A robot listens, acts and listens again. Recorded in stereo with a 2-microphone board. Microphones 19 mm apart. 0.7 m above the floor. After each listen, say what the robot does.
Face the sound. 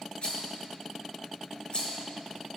Turn 55° left.
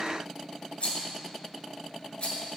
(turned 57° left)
Turn 70° left.
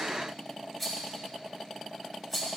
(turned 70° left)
Facing the rattle.